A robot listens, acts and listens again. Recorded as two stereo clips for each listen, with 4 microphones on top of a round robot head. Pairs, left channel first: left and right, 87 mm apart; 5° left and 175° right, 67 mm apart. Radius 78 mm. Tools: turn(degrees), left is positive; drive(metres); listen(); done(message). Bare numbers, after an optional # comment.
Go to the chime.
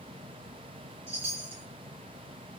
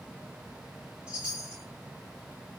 # The chime: 90° right.
turn(-90)
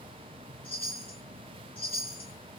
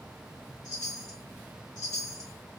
# The chime is now 15° left.
turn(15)
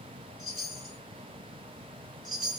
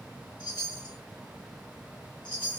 drive(1.0)
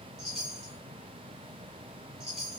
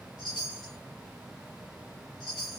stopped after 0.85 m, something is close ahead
# The chime is now 10° right.
turn(-10)
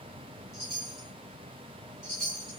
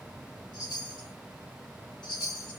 done("I am next to the chime.")